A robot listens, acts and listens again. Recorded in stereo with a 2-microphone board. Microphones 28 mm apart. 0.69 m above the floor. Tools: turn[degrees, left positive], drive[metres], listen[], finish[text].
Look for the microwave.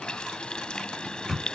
Action: turn[30]
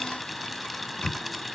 Thought: So it is at 135° left.
Action: turn[135]
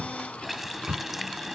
Thought: The microwave is now 35° right.
Action: turn[-35]
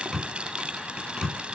Action: finish[Facing the microwave.]